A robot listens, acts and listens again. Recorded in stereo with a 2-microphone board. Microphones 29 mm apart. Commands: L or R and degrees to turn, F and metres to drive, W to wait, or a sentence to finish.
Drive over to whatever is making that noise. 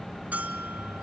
R65
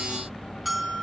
F1.0
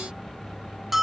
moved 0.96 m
R10
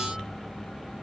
W
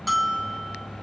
F1.0
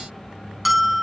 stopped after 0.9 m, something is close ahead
Arrived at the bell, straight ahead.